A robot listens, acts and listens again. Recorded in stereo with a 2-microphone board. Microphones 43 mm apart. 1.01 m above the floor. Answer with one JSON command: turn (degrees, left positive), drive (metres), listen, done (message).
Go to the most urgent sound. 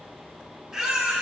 {"turn": -30}
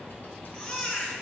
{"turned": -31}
{"turn": 20}
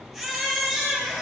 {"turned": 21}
{"drive": 1.0}
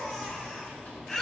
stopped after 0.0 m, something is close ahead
{"turn": 10}
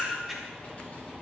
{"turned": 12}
{"done": "Blocked. The baby crying is further on, straight ahead."}